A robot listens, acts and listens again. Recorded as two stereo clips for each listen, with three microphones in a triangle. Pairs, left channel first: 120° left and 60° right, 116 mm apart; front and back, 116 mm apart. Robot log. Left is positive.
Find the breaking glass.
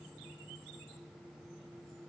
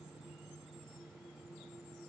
cmd idle
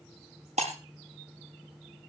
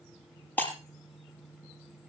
note: The breaking glass: 75° right.
cmd yaw -75
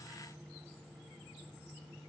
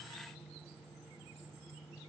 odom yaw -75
end: Facing where the breaking glass came from. I can't hear it now.